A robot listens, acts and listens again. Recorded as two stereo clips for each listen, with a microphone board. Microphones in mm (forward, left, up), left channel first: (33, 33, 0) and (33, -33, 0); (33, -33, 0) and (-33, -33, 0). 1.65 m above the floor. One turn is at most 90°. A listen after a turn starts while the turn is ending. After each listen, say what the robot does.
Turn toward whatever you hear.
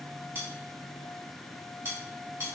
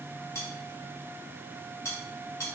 Turn 40° right.
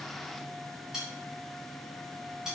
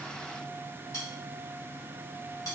Facing the cutlery clinking.